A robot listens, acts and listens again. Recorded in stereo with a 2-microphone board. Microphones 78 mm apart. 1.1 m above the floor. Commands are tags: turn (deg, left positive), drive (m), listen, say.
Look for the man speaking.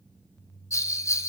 <listen/>
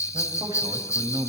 <turn deg="-60"/>
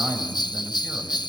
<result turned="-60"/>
<say>Found it: a man speaking, straight ahead.</say>